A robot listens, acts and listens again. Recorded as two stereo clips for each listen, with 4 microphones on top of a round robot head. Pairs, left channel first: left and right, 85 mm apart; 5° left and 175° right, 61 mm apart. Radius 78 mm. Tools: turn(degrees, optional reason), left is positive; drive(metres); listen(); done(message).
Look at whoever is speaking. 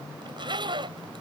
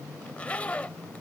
listen()
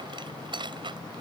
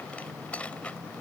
listen()
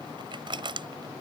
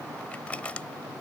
done("I can't make out anyone speaking to turn to.")